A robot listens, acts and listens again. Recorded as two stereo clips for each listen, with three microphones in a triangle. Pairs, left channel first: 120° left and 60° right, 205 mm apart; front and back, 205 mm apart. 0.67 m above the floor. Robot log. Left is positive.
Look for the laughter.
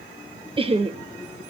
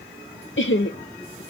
note: The laughter: 10° right.
cmd yaw -10
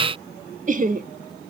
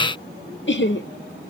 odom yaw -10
note: The laughter is now 15° right.
cmd yaw -15
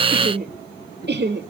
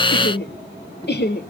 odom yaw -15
note: The laughter is now 35° right.
cmd yaw -35
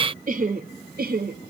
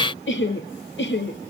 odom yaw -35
note: The laughter is now 20° right.
cmd yaw -20
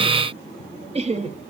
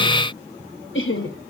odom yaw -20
end: Facing the laughter.